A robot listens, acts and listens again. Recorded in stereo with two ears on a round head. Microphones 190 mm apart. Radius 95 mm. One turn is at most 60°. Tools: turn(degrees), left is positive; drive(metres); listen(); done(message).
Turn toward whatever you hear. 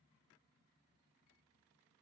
listen()
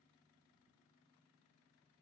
listen()
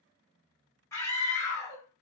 turn(degrees=30)
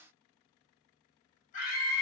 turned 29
turn(degrees=60)
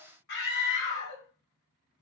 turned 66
turn(degrees=60)
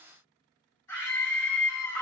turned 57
turn(degrees=15)
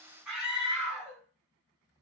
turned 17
done("Found it: a scream, straight ahead, 1 to 2 m away.")